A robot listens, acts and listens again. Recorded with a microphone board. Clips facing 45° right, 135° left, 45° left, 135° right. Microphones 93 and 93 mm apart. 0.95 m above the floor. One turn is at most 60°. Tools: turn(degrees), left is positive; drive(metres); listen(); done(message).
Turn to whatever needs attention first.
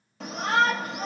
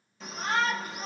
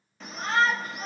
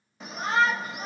turn(degrees=-60)
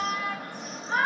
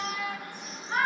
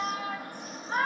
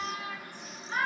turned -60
done("Found it: a shout, straight ahead.")